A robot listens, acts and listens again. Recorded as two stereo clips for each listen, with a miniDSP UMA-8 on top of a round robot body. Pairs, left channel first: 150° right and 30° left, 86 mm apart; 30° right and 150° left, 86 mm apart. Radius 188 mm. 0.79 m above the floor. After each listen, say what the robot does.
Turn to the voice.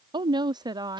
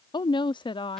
Turn 10° right.
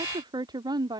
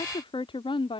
Turn 10° right.
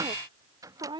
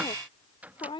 Facing the woman speaking.